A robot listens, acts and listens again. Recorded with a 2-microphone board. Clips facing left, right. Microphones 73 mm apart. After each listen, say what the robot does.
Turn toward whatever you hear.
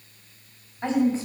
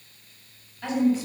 Turn 35° left.
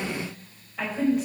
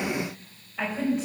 Facing the woman speaking, over 4 m away.